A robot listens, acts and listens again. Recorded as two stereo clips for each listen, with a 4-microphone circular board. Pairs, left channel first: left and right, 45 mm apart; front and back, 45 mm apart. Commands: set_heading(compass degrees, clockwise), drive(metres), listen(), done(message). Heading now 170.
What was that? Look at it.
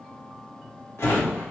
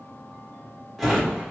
set_heading(80)
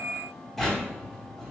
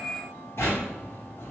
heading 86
done("Facing the drawer.")